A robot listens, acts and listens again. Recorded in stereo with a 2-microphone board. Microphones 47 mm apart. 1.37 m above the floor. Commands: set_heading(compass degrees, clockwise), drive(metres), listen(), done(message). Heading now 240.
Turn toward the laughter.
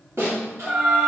set_heading(305)
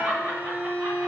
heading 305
set_heading(350)
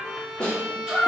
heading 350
set_heading(0)
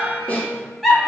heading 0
done("Facing the laughter.")